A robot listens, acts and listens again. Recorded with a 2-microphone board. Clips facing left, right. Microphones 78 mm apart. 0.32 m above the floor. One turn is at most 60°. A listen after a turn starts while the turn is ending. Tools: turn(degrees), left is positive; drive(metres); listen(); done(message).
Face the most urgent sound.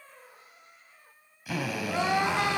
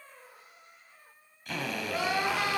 turn(degrees=25)
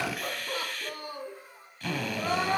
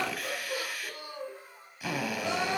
turn(degrees=60)
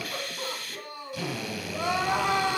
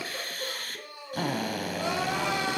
turn(degrees=60)
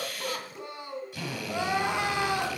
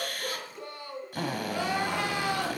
turn(degrees=25)
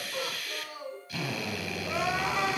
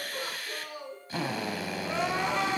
done("Facing the crying.")